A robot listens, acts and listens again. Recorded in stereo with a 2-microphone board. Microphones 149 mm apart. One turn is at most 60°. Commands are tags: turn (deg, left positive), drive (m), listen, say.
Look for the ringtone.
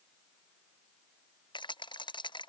<listen/>
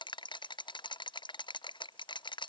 <listen/>
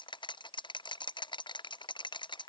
<say>I can't make out a ringtone to turn to.</say>